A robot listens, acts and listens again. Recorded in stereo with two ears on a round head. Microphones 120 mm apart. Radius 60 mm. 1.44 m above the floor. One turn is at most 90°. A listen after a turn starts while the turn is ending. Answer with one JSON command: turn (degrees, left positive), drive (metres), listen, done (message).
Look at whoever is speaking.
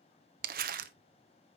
{"listen": true}
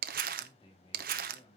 {"turn": 35}
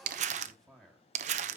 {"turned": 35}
{"done": "Facing the man speaking."}